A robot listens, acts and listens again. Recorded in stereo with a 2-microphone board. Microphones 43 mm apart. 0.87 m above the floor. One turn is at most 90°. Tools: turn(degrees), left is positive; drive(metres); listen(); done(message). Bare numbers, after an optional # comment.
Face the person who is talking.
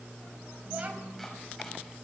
# The child speaking: about 40° right or 140° right.
turn(-40)
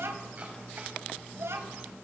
# So it is at 100° right.
turn(-90)
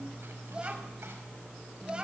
# The child speaking is now 20° right.
turn(-20)
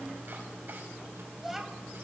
done("Facing the child speaking, 2 to 4 m away.")